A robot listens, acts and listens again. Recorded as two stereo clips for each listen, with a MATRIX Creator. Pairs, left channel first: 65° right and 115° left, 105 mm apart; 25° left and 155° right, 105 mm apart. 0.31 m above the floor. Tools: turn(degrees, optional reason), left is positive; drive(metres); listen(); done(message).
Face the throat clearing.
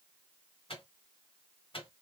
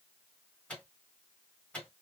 listen()
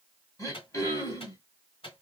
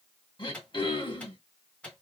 turn(degrees=-15, reason="The throat clearing: 15° right.")
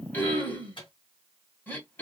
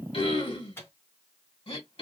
done("Facing the throat clearing.")